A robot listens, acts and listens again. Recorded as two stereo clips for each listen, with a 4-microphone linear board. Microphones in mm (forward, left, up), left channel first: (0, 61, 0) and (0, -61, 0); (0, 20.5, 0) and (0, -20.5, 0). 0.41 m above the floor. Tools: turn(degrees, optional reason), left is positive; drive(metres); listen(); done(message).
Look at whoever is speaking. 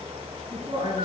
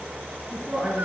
turn(degrees=-40, reason="The woman speaking: about 40° right or 140° right.")
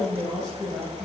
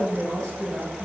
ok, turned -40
done("Facing the woman speaking.")